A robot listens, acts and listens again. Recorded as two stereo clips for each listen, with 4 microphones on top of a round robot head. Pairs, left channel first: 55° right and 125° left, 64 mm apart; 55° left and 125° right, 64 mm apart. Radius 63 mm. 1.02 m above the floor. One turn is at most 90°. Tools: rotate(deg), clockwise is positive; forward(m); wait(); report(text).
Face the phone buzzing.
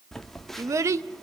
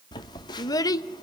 rotate(-30)
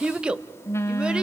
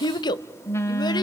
report("Facing the phone buzzing.")